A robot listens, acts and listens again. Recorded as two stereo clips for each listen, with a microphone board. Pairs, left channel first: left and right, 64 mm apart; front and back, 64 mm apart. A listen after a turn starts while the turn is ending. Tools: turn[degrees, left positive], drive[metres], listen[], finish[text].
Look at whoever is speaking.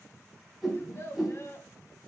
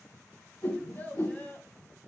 Thought: The child speaking: 55° left.
Action: turn[55]
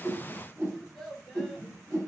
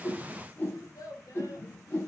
Action: finish[Facing the child speaking, 1 to 2 m away.]